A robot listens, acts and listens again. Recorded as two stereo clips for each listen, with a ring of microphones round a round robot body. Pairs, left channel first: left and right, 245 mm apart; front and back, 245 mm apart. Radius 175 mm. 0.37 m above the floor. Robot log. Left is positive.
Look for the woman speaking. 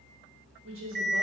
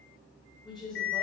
note: The woman speaking: 90° right.
cmd yaw -90
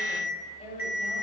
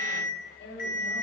note: The woman speaking is now 30° left.
cmd yaw +30
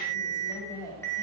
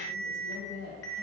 note: The woman speaking is now 15° left.
cmd yaw +15
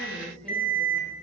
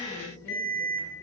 cmd idle
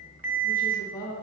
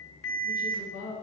note: The woman speaking is now 15° left.
cmd yaw +15
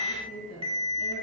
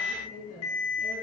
end: Found it: a woman speaking, straight ahead, 2 to 4 m away.